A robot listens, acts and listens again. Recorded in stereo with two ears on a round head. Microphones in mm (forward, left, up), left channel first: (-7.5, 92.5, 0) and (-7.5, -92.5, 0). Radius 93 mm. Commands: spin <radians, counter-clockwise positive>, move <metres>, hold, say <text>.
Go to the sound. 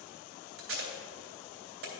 spin -1.13
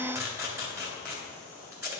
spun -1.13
spin -0.26
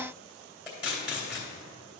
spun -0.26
move 1.0
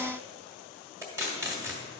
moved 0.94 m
spin -0.26
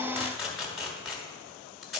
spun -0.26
move 1.0
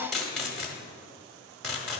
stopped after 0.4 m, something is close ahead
say I am next to the tape being pulled.